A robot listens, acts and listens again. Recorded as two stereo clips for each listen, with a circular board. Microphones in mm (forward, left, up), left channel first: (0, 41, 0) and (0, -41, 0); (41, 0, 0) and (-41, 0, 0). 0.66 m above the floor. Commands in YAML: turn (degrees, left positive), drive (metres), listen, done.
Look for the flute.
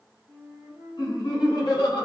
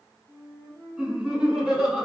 turn: 180
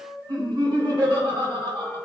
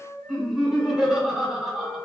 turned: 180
turn: -20
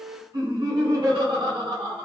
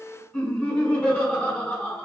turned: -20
done: "Facing the flute."